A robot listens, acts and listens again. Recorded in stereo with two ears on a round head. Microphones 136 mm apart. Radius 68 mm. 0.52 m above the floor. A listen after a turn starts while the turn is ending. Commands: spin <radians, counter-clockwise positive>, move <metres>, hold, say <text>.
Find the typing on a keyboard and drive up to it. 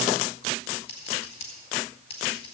hold
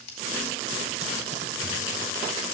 hold
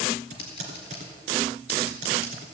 spin -0.87
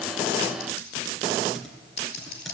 hold
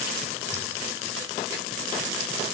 hold
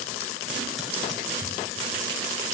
say I heard typing on a keyboard, but can't make it out now. It was about straight ahead or 80° right. I did not reach it.